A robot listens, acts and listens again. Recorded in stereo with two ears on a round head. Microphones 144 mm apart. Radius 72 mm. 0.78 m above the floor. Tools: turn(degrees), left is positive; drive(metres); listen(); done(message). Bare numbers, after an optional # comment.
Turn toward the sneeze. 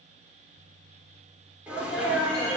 turn(-30)
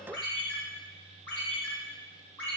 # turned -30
listen()
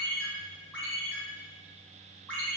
done("I heard a sneeze, but can't make it out now. It was about 20° left or 140° right.")